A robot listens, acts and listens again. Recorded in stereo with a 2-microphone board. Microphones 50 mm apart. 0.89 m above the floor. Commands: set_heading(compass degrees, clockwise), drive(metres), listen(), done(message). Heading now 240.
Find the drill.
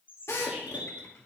set_heading(180)
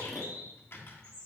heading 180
listen()
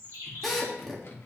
done("Facing the drill.")